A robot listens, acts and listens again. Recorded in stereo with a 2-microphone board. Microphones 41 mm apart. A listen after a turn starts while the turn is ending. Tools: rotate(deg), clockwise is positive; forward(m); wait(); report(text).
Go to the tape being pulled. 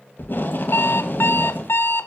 rotate(-55)
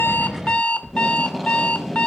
forward(1.0)
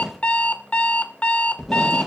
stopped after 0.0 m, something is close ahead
report("Blocked. The tape being pulled is further on, straight ahead.")